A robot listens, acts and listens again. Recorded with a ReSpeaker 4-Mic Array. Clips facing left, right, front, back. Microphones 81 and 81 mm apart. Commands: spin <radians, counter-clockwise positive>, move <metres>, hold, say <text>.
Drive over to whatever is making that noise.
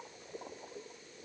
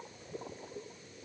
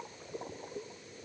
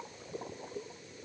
hold
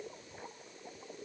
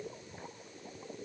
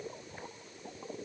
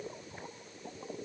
hold
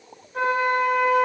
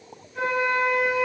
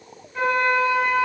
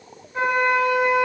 spin 2.09
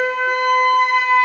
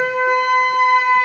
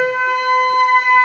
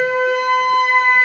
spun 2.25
spin -0.17
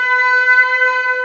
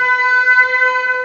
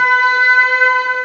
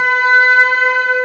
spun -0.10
move 1.0
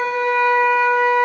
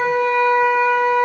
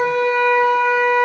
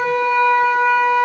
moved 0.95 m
move 1.0
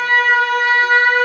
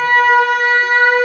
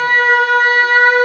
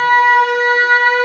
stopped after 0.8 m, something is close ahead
spin -0.17
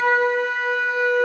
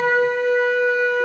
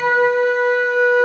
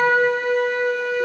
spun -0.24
say I am next to the flute.